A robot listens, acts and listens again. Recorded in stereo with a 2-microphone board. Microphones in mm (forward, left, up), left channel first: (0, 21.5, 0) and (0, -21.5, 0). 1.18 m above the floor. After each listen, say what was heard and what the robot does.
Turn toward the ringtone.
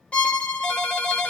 The ringtone: about 55° left or 125° left. Turn 55° left.
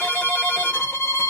Keep listening.
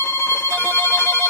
Keep listening.
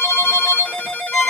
So it is at 60° left. Turn 60° left.
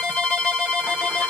The ringtone is now 10° right. Turn 10° right.
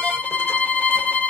Keep listening.
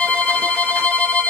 Keep listening.
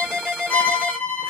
Found it: a ringtone, straight ahead.